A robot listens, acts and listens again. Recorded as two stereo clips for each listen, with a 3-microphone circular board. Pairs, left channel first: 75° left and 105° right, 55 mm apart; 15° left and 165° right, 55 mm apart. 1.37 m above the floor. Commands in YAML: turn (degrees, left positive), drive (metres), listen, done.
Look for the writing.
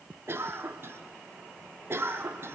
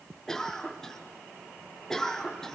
listen: true
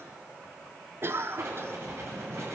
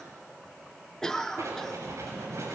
turn: -140
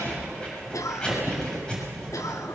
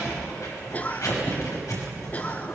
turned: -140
done: "Found it: writing, straight ahead."